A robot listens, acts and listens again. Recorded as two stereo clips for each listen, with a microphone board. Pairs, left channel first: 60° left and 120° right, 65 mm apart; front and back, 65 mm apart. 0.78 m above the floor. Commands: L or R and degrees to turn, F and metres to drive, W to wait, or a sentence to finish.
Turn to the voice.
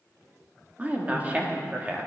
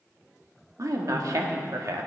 L175
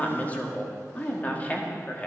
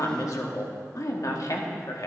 Facing the woman speaking.